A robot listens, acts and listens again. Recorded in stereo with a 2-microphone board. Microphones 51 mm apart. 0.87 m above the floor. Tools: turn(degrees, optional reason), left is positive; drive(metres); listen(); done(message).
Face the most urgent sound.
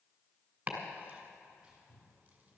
listen()
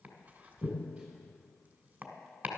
listen()
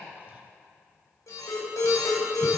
turn(degrees=70, reason="The alarm: about 70° left or 110° left.")
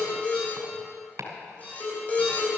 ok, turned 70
turn(degrees=30, reason="So it is at 30° left.")
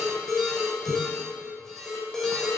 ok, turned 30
done("Found it: an alarm, straight ahead.")